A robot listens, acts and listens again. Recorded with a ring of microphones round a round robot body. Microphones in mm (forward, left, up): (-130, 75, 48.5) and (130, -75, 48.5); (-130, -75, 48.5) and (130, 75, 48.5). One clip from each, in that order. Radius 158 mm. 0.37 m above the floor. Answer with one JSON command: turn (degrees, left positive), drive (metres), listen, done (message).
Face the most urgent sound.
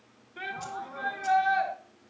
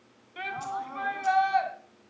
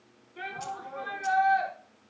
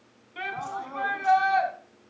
{"done": "Facing the shout."}